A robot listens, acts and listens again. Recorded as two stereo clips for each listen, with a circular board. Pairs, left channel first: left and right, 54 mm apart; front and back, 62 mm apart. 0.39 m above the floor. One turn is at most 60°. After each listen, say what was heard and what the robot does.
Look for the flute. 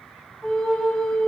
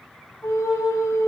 The flute: 20° left. Turn 20° left.
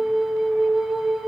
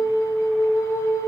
Found it: a flute, straight ahead, 1 to 2 m away.